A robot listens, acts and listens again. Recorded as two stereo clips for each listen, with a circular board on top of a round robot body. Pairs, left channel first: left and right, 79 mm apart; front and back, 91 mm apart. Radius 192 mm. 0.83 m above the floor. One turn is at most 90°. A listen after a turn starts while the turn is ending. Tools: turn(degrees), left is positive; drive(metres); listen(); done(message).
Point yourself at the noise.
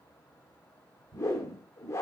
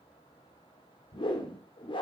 turn(degrees=35)
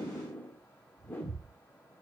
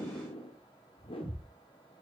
turn(degrees=25)
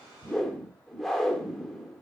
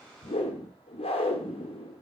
done("Found it: a whoosh, straight ahead.")